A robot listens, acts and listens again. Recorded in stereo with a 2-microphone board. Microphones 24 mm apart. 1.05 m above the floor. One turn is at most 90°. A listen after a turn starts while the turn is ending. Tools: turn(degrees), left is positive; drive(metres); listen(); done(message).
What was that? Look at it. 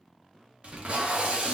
turn(degrees=-55)
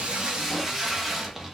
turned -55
turn(degrees=-15)
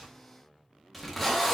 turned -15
done("Facing the tape being pulled.")